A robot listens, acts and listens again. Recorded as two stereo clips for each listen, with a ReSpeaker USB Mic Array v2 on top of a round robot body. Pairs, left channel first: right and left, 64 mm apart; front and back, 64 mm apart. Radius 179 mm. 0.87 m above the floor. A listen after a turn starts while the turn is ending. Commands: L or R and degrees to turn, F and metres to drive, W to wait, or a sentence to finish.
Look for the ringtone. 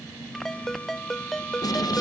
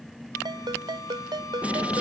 R175
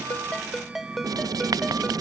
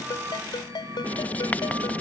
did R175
Found it: a ringtone, straight ahead.